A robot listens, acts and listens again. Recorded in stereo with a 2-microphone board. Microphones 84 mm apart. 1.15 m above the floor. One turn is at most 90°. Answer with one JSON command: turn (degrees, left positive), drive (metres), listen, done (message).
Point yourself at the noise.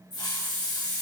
{"turn": 65}
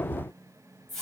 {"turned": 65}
{"done": "Found it: a hiss, straight ahead."}